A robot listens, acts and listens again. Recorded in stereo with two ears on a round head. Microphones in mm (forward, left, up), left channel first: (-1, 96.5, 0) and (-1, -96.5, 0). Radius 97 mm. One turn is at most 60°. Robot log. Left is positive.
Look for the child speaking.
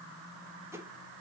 cmd idle
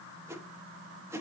cmd idle
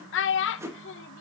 note: The child speaking: about 60° left or 120° left.
cmd yaw +60
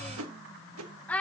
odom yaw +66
note: So it is at 10° left.
cmd yaw +10
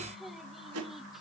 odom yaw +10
cmd idle
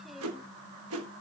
cmd idle
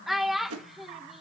end: Facing the child speaking.